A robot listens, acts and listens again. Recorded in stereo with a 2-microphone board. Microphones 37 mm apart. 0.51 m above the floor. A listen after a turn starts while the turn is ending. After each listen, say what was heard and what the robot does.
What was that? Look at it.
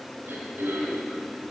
Turn 90° right.
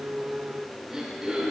So it is at 15° right. Turn 15° right.
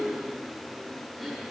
Keep listening.
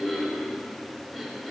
Found it: throat clearing, straight ahead, over 4 m away.